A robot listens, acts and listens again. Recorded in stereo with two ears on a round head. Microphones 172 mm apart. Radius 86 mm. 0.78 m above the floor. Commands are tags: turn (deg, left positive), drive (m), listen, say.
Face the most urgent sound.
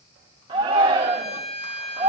<turn deg="-25"/>
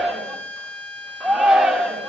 <say>Found it: a shout, straight ahead.</say>